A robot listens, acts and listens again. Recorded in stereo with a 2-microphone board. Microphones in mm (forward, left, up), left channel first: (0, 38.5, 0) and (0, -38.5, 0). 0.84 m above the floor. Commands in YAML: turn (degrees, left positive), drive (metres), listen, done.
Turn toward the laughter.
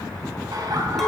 turn: -55
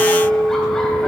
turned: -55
listen: true
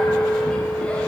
listen: true
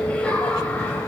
turn: 20
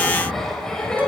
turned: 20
turn: 10
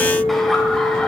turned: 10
listen: true
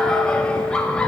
turn: 10
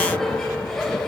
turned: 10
done: "Facing the laughter."